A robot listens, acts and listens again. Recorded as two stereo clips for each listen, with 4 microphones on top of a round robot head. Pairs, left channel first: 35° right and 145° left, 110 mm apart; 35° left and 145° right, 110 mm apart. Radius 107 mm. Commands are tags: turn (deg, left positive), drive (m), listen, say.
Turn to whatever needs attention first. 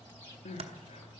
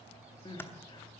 <turn deg="-15"/>
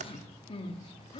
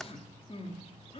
<say>Found it: crying, straight ahead.</say>